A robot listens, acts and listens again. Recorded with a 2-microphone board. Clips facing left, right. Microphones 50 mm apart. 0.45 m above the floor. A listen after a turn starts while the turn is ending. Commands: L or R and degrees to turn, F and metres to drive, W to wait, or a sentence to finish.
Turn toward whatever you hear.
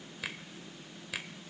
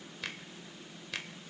L30
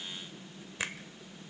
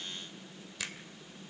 L140
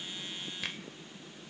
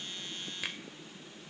Facing the finger snap.